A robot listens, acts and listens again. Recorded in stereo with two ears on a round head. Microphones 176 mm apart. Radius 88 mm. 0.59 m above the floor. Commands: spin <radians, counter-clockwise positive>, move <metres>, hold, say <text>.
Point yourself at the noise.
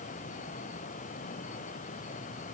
hold
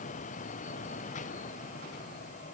hold
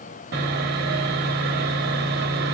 spin -0.96
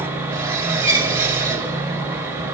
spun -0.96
spin -0.26
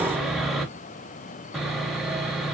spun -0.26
say Facing the sawing, under 1 m away.